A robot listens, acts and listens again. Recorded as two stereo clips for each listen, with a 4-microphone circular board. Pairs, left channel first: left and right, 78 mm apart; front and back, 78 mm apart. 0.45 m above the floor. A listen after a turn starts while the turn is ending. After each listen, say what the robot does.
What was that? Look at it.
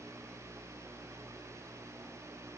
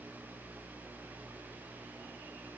Keep listening.
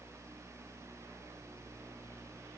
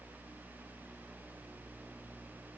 Keep listening.
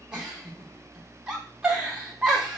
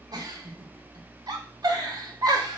Turn 170° right.
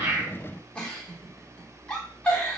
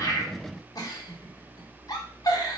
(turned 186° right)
Turn 20° left.
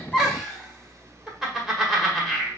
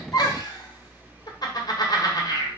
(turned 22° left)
Found it: a giggle, straight ahead, 1 to 2 m away.